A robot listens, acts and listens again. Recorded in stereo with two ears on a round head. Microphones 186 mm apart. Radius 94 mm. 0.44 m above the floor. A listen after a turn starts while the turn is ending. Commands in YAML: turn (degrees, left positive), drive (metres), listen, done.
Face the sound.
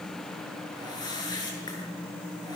turn: 20
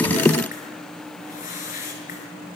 turn: 135
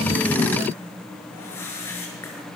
turn: 15
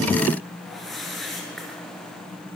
done: "Found it: a whoosh, straight ahead, over 4 m away."